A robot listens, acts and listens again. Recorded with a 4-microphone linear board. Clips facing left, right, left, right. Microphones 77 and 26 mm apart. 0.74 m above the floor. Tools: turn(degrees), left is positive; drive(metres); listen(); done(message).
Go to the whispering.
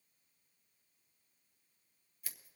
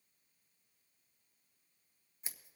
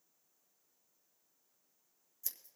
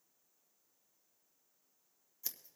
listen()
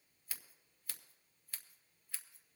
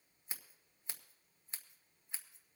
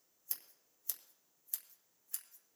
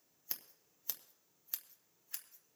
listen()
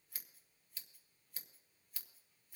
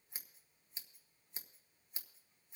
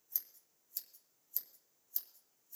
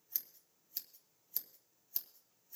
done("I can't make out whispering, only scissors.")